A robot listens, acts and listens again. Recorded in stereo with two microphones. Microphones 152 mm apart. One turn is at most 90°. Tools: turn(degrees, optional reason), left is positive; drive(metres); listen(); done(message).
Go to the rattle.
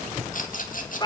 turn(degrees=60, reason="The rattle: about 60° left or 120° left.")
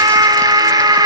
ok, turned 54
listen()
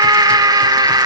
listen()
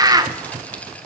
done("I heard a rattle, but can't make it out now. It was about 10° left or 65° left. I did not reach it.")